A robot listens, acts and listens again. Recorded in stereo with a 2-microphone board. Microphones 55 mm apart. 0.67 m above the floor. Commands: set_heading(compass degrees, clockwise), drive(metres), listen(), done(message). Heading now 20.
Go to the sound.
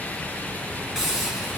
set_heading(50)
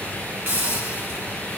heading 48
set_heading(193)
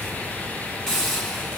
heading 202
set_heading(192)
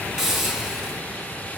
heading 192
drive(1.0)
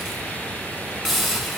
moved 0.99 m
drive(1.0)
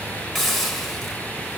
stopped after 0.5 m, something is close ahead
done("I am next to the hiss.")